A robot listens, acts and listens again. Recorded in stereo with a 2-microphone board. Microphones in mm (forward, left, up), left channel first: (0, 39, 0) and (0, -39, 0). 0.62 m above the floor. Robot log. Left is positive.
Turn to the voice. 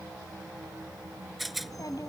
note: The child speaking: about 55° left or 125° left.
cmd yaw +55
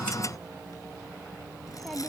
end: Facing the child speaking.